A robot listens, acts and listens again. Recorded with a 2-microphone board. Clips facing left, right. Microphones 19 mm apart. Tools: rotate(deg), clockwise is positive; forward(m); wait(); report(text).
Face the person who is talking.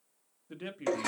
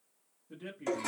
rotate(-45)
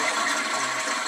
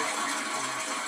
wait()
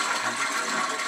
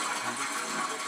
wait()
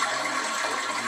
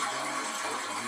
report("I heard a man speaking, but can't make it out now. It was about straight ahead or 90° left.")